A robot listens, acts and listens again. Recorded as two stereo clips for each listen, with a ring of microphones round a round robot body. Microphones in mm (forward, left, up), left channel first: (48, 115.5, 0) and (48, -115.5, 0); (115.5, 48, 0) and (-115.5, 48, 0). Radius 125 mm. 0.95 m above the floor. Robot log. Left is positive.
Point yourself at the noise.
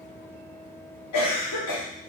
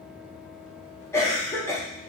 note: The cough: 80° left.
cmd yaw +80
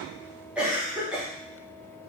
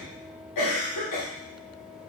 end: Found it: a cough, straight ahead.